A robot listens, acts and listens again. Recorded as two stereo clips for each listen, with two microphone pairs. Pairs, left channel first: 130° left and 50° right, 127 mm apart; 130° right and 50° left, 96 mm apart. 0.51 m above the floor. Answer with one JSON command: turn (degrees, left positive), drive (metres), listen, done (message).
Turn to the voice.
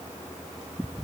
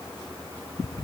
{"listen": true}
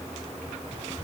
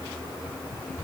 {"listen": true}
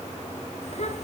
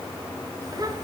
{"turn": 95}
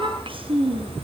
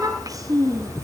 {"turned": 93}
{"done": "Found it: a child speaking, straight ahead, 2 to 4 m away."}